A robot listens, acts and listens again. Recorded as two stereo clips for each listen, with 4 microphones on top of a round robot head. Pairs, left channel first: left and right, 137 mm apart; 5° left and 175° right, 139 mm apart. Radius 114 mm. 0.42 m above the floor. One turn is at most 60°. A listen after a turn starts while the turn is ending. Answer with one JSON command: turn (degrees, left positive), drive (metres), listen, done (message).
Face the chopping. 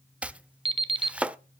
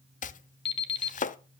{"turn": -10}
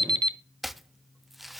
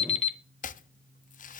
{"done": "Facing the chopping, under 1 m away."}